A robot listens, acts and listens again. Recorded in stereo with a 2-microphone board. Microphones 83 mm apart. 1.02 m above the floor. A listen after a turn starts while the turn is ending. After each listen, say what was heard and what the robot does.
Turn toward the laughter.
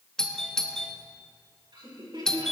The laughter: about 70° right or 110° right. Turn 70° right.
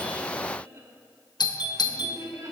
So it is at 45° right. Turn 45° right.
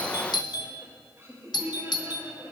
The laughter is now 35° right. Turn 35° right.
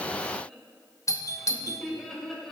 Facing the laughter.